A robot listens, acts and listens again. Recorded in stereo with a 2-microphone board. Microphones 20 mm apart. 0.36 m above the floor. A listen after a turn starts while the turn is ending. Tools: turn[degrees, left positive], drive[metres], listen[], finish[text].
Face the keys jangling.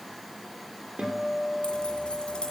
Thought: The keys jangling: about 65° left or 115° left.
Action: turn[65]
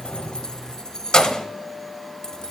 Thought: So it is at 35° left.
Action: turn[35]
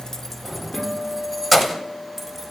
Thought: The keys jangling is now 10° right.
Action: turn[-10]
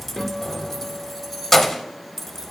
Action: finish[Found it: keys jangling, straight ahead.]